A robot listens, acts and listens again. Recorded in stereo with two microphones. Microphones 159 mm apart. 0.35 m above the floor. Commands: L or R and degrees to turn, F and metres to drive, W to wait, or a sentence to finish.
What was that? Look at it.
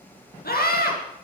L75
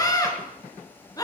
L25
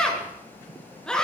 Facing the scream.